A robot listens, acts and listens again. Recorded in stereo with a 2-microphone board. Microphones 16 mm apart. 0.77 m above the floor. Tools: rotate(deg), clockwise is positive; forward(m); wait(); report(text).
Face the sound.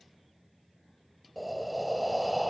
rotate(-30)
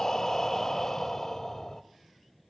rotate(-145)
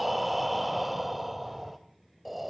rotate(10)
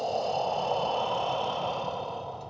report("Found it: breathing, straight ahead, 1 to 2 m away.")